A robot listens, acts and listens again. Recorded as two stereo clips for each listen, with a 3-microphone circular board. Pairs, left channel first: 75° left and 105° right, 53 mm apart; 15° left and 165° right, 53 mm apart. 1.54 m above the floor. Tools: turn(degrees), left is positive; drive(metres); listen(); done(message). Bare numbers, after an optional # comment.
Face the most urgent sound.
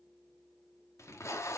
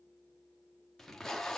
listen()
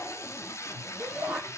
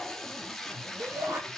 # The shout: 175° right.
turn(-175)
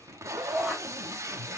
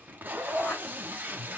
# The shout is now 25° right.
turn(-25)
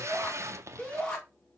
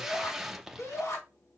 done("Found it: a shout, straight ahead.")